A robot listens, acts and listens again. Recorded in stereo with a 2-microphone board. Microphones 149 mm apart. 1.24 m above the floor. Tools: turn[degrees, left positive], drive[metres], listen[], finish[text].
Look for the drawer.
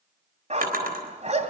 Action: turn[-90]
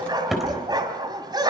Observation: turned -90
Action: finish[Found it: a drawer, straight ahead, 2 to 4 m away.]